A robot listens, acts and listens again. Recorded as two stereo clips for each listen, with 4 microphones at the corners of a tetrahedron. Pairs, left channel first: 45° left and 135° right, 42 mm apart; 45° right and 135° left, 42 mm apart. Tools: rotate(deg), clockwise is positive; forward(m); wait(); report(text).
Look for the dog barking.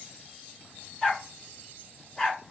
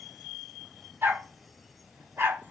rotate(-135)
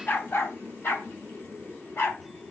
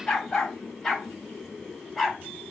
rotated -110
rotate(-50)
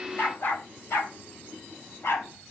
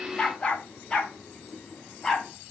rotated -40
rotate(-35)
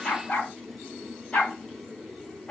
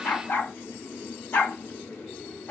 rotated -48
rotate(15)
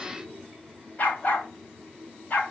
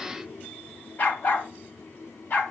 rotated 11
report("Facing the dog barking, 2 to 4 m away.")